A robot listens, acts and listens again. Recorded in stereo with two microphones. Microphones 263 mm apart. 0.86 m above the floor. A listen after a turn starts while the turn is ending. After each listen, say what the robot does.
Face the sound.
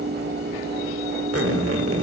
Turn 60° right.
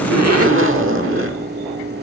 Turn 55° right.
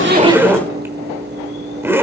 Turn 10° right.
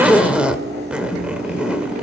Found it: a zipper, straight ahead, 1 to 2 m away.